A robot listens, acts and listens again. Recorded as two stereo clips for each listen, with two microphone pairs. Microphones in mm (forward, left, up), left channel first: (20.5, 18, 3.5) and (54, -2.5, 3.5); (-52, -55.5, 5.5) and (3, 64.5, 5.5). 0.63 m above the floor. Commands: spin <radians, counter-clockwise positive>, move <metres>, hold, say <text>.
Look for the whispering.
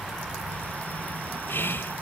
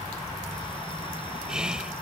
spin 2.62
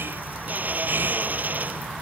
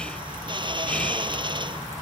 hold
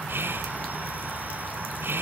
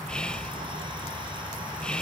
spin -0.52
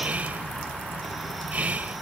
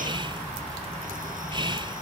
spin 0.26
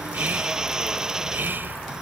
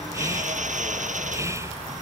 say Facing the whispering.